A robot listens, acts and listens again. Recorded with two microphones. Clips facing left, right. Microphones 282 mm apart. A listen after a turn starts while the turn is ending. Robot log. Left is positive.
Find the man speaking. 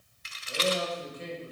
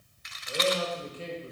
note: The man speaking: about 30° right or 150° right.
cmd yaw -30
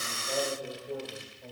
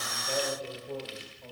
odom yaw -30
note: So it is at 10° left.
cmd yaw +10
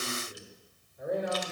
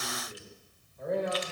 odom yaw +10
note: The man speaking is now 15° left.
cmd yaw +15
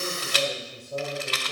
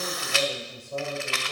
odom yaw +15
note: The man speaking is now 10° left.
cmd yaw +10
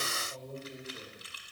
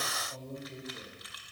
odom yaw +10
end: Facing the man speaking.